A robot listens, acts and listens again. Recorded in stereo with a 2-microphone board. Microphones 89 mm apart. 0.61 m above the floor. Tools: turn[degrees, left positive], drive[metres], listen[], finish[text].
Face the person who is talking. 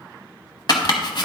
Action: listen[]
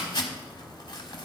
Action: listen[]
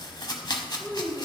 Thought: The child speaking: about 20° left or 160° left.
Action: turn[20]
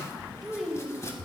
Action: finish[Found it: a child speaking, straight ahead, 1 to 2 m away.]